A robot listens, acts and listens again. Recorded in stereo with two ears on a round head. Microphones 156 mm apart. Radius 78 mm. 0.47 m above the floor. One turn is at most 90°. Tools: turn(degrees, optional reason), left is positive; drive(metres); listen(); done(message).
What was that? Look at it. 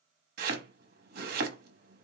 turn(degrees=-60, reason="The chopping: about 60° right or 120° right.")
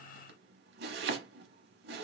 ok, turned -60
turn(degrees=-65, reason="So it is at 65° right.")
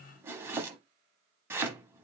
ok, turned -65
turn(degrees=-15, reason="The chopping is now 15° right.")
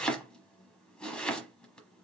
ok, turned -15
done("Facing the chopping, under 1 m away.")